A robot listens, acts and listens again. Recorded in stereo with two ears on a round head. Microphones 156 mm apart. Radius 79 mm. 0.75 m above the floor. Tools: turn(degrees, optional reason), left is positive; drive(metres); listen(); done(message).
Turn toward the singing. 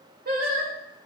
turn(degrees=-55, reason="The singing: about 55° right or 125° right.")
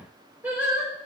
turn(degrees=-10, reason="So it is at 10° right.")
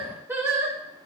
turn(degrees=-15, reason="The singing is now 15° right.")
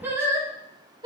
turn(degrees=-25, reason="The singing is now 25° right.")
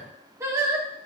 turn(degrees=-20, reason="The singing is now 20° right.")
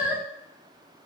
turn(degrees=-10, reason="The singing is now 10° right.")
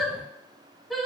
done("Found it: singing, straight ahead.")